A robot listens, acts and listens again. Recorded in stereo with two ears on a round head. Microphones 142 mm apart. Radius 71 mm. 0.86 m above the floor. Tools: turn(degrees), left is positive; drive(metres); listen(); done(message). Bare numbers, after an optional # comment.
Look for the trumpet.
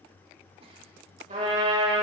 # The trumpet: about 45° right or 135° right.
turn(-45)
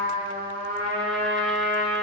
# So it is at 80° right.
turn(-80)
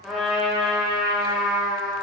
done("Facing the trumpet.")